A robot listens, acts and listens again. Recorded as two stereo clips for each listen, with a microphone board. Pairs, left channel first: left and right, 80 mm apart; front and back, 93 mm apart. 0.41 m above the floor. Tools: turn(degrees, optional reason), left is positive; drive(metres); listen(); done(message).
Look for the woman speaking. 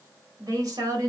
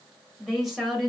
turn(degrees=-85, reason="The woman speaking: 85° right.")
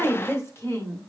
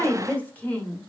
turn(degrees=70, reason="The woman speaking is now 70° left.")
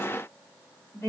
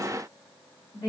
turn(degrees=35, reason="The woman speaking is now 35° left.")
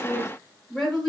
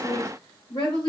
done("Facing the woman speaking, 1 to 2 m away.")